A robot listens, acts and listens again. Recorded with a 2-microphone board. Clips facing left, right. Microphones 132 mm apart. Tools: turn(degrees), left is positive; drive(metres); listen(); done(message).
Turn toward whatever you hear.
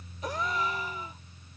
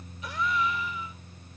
turn(degrees=40)
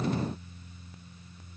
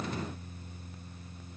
listen()
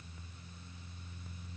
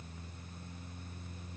done("I heard a gasp, but can't make it out now. It was about straight ahead or 100° left.")